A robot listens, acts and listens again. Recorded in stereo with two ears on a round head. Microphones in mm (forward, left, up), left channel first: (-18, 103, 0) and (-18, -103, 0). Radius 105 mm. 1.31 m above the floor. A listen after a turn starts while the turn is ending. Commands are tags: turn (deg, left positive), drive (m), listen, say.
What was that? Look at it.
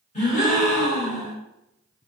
<turn deg="30"/>
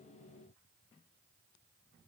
<listen/>
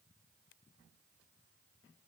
<say>I heard a gasp, but can't make it out now. It was about straight ahead or 120° left.</say>